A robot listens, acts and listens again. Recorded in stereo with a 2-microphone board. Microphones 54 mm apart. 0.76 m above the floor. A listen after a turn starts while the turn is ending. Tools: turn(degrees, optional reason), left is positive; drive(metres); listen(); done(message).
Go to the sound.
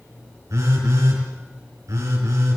turn(degrees=-70, reason="The phone buzzing: about 70° right or 110° right.")
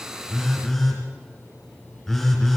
drive(metres=1.0)
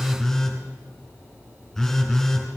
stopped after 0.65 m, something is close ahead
done("Something is in my way. I am facing the phone buzzing but have not reached it.")